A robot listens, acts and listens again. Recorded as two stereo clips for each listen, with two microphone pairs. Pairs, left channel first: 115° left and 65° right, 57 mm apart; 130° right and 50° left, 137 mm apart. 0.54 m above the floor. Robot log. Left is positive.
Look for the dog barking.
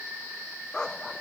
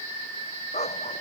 note: The dog barking: 165° right.
cmd yaw -165
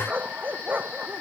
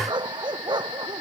end: Found it: a dog barking, straight ahead.